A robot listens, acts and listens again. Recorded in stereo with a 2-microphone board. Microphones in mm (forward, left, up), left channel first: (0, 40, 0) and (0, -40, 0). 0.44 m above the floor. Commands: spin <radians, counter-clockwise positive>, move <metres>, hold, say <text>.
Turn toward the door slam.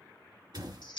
spin -0.96
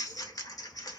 hold
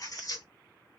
say I heard a door slam, but can't make it out now. It was about straight ahead or 70° right.